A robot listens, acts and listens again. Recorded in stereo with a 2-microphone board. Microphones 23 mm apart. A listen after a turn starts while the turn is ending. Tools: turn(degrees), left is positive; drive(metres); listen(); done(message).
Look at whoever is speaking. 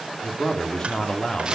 turn(degrees=45)
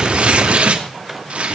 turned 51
listen()
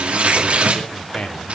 turn(degrees=80)
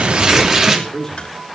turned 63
turn(degrees=15)
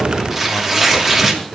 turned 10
listen()
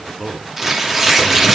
done("Found it: a man speaking, straight ahead.")